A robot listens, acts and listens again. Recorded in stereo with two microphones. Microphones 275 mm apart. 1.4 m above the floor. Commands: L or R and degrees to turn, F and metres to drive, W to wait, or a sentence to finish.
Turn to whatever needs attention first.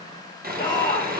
L15
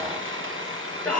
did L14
Found it: a shout, straight ahead, over 4 m away.